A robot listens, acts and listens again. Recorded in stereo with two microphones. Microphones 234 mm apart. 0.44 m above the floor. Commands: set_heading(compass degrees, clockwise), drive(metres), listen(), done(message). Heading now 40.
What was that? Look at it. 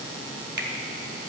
set_heading(90)
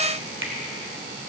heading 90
set_heading(160)
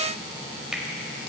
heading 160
done("Facing the finger snap.")